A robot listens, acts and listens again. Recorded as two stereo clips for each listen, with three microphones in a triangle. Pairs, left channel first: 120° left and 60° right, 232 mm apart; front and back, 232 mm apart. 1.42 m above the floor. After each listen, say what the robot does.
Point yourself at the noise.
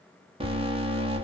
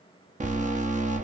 Turn 120° right.
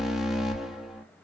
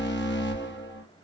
Turn 30° left.
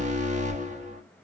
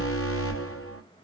Facing the alarm.